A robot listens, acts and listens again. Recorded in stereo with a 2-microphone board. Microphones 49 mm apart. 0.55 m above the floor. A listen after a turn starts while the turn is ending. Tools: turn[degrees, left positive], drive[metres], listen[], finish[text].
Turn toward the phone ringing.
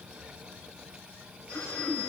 Action: turn[90]
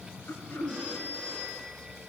Thought: So it is at 10° right.
Action: turn[-10]
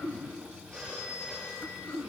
Action: finish[Facing the phone ringing, over 4 m away.]